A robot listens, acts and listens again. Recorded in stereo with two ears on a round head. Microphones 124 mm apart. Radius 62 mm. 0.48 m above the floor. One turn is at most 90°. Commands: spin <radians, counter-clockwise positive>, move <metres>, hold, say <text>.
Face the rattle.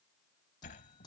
hold
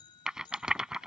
spin -0.52
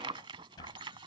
spin -1.57
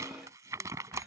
spin -0.44
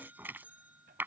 spin -0.26
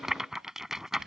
say Found it: a rattle, straight ahead.